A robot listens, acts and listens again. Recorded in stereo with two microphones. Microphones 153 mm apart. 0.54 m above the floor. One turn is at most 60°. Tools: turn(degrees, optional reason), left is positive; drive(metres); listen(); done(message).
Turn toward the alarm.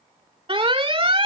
turn(degrees=-35, reason="The alarm: about 35° right or 145° right.")
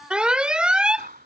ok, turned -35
done("Facing the alarm.")